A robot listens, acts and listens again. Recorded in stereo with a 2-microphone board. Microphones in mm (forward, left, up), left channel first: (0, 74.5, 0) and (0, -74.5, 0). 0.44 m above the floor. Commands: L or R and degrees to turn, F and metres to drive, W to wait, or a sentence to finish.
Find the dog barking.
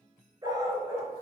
R20
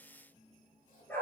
L15
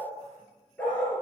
L15
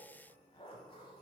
W
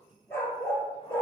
L15
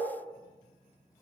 Found it: a dog barking, straight ahead.